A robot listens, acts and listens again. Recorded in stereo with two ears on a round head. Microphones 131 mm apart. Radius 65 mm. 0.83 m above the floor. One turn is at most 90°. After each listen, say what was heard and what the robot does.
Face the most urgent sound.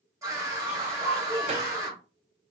The scream: about 20° right or 160° right. Turn 20° right.
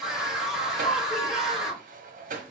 Found it: a scream, straight ahead, 1 to 2 m away.